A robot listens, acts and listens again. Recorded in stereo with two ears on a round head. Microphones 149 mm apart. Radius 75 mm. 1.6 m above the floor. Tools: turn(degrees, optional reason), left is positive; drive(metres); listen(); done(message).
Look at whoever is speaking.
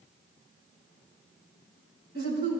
turn(degrees=-90)
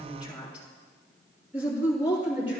turn(degrees=-10, reason="So it is at 10° right.")
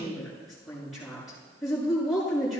done("Facing the woman speaking, over 4 m away.")